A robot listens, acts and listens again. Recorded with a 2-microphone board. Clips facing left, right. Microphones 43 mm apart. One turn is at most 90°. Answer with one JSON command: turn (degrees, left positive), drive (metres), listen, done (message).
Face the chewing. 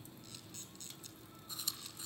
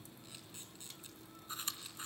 {"turn": -40}
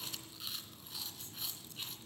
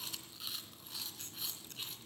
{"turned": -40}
{"done": "Found it: chewing, straight ahead."}